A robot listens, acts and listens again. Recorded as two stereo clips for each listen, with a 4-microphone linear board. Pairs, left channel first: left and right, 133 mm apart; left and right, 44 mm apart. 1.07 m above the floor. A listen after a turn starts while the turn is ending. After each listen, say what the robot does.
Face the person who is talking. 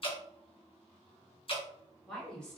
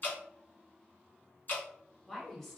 Turn 30° left.
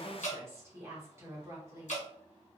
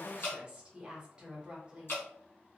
Turn 25° right.
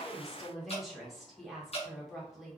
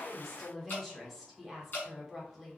Facing the woman speaking.